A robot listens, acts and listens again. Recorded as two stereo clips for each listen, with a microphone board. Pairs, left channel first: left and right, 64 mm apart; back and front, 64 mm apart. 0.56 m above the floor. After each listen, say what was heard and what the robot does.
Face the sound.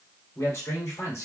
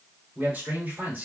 The man speaking: 60° left. Turn 60° left.
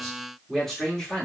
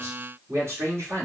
The man speaking is now 10° left. Turn 10° left.
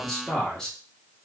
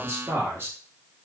The man speaking is now 15° left. Turn 15° left.
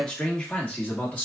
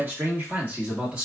The man speaking is now 55° left. Turn 55° left.
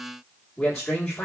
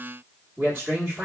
The man speaking is now 15° left. Turn 15° left.
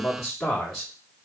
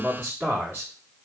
Facing the man speaking, 1 to 2 m away.